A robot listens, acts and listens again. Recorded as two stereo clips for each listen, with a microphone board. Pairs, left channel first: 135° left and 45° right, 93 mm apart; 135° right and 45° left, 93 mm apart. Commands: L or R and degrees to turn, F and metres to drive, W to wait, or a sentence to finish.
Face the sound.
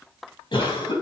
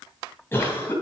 L160
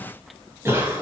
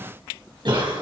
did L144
L15
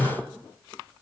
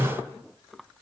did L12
Facing the cough, over 4 m away.